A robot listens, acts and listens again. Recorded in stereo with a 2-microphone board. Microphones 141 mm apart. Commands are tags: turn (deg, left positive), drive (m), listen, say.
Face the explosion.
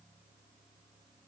<listen/>
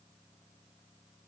<listen/>
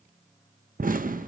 <turn deg="-90"/>
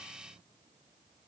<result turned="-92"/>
<say>I heard an explosion from this way, but can't make it out now.</say>